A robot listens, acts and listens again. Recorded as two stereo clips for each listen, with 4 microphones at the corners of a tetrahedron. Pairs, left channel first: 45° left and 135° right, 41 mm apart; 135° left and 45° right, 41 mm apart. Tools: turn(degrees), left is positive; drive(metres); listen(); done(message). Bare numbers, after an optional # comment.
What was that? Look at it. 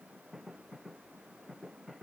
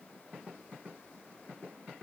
listen()
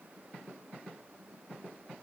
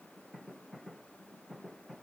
listen()
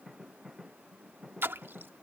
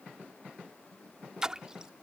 # The splash: 120° right.
turn(-120)
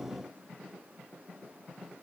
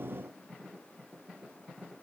done("I heard a splash from this way, but can't make it out now.")